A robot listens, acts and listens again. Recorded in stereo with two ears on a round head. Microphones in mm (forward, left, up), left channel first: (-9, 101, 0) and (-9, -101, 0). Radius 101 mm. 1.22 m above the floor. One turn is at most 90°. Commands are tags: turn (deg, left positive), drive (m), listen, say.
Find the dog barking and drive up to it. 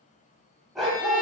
<turn deg="30"/>
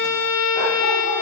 <listen/>
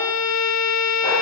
<listen/>
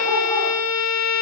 <say>I heard a dog barking, but can't make it out now. It was about 30° right or 150° left. I did not reach it.</say>